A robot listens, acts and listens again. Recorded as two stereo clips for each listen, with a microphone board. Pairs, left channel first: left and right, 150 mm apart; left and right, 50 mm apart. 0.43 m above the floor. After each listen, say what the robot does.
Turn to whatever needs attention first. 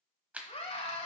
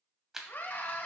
Turn 45° left.
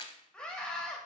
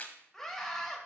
Found it: a scream, straight ahead.